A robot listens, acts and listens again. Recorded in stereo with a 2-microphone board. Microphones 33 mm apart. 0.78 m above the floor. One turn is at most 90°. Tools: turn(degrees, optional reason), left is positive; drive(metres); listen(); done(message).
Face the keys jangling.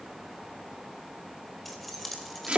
turn(degrees=30)
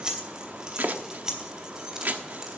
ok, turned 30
turn(degrees=-20, reason="So it is at 20° right.")
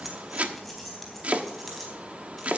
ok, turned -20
done("Found it: keys jangling, straight ahead, over 4 m away.")